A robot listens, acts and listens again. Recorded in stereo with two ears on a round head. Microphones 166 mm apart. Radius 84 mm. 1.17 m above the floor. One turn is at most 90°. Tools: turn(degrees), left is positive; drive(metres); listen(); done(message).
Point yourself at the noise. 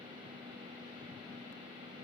listen()
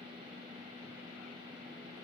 listen()
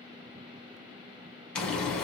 turn(degrees=30)
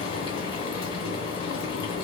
turn(degrees=90)
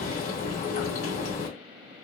turn(degrees=45)
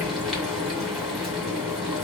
done("Facing the frying, 1 to 2 m away.")